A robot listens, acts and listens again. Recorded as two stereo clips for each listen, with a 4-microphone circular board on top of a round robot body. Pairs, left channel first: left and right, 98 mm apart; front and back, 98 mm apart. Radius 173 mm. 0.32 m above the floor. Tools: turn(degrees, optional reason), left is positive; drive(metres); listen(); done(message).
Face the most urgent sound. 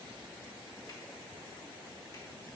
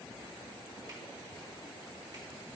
listen()
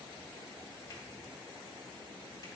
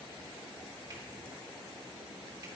listen()
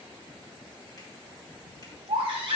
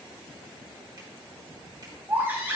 turn(degrees=-110, reason="The baby crying: 110° right.")
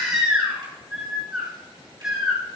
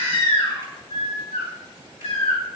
turn(degrees=-10, reason="The baby crying is now 10° right.")
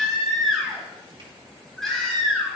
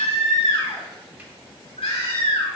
done("Found it: a baby crying, straight ahead.")